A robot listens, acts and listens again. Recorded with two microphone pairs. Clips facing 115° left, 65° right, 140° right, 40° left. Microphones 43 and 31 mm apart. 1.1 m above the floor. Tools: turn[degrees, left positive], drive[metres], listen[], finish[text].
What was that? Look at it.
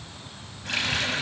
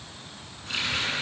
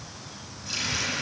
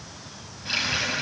Thought: The running tap: 95° left.
Action: turn[95]
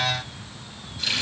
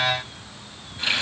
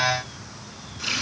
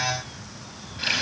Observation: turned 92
Action: finish[Facing the running tap, over 4 m away.]